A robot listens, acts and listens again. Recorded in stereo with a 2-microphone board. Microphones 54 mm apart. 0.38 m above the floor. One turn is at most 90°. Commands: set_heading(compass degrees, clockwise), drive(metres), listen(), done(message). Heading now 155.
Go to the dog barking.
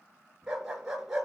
set_heading(185)
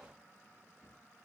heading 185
listen()
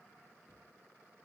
listen()
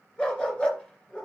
set_heading(170)
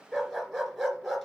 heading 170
drive(1.0)
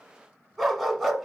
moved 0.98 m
drive(1.0)
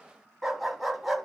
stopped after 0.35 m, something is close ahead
done("I am next to the dog barking.")